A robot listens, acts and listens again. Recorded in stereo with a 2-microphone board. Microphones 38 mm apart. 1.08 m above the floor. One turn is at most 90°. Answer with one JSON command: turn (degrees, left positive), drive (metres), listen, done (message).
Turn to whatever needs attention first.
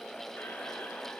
{"listen": true}
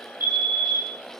{"turn": -70}
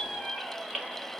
{"listen": true}
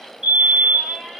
{"turn": -20}
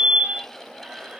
{"done": "Facing the fire alarm, 2 to 4 m away."}